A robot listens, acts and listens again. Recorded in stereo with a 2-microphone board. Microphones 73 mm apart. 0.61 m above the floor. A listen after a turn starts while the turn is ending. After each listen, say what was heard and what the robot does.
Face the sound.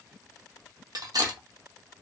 The cutlery clinking: about 60° right or 120° right. Turn 60° right.
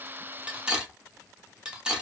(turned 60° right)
So it is at 15° right. Turn 15° right.
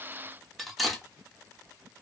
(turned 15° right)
Facing the cutlery clinking.